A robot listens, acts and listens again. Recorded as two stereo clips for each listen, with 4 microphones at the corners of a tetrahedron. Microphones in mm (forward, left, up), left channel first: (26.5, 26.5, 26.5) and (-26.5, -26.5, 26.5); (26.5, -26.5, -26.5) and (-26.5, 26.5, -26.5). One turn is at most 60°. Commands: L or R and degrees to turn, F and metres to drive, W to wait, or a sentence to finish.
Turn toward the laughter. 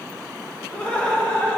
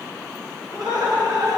L60
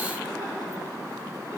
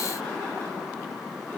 L55
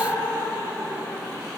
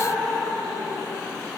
R20
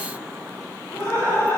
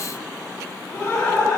Facing the laughter.